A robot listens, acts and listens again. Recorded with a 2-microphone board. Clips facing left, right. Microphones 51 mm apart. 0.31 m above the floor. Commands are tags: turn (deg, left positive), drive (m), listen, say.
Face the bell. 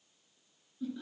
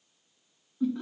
<listen/>
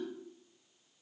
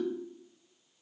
<listen/>
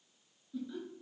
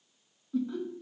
<say>I can't make out a bell to turn to.</say>